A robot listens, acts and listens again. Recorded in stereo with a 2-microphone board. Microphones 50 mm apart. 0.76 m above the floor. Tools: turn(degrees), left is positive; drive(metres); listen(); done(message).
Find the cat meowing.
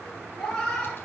turn(degrees=30)
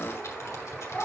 turn(degrees=140)
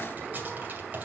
listen()
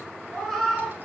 done("Found it: a cat meowing, straight ahead.")